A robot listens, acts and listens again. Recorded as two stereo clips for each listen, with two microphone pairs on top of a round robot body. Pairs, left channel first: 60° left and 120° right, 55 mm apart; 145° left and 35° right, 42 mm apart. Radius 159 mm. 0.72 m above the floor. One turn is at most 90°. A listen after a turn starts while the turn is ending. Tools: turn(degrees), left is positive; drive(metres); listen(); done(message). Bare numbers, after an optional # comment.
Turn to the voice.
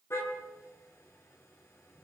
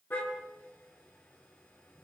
listen()
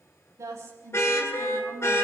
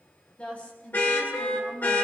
# The woman speaking: 155° right.
turn(-90)
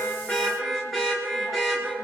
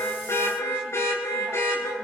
# Nothing new. It was at 65° right.
turn(-65)
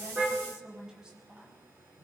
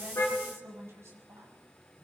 # The woman speaking is now 40° right.
turn(-40)
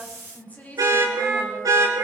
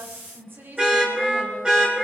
done("Found it: a woman speaking, straight ahead.")